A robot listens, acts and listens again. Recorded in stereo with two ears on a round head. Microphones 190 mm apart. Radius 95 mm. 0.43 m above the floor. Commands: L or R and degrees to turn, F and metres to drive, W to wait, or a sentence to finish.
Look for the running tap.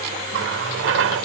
R60
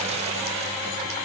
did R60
W
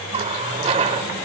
R35
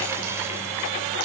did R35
W
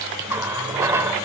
R15
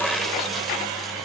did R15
Facing the running tap, under 1 m away.